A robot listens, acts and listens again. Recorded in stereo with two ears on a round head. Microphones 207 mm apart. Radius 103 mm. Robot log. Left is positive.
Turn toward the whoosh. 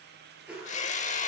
cmd yaw -30
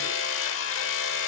cmd idle
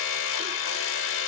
cmd idle
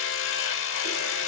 end: I heard a whoosh, but can't make it out now. It was about 25° left or 145° right.